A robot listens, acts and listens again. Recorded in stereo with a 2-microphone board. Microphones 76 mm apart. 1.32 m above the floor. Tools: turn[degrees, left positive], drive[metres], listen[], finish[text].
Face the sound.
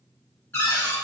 Thought: The cupboard door: about 25° left or 155° left.
Action: turn[25]
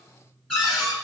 Action: finish[Found it: a cupboard door, straight ahead.]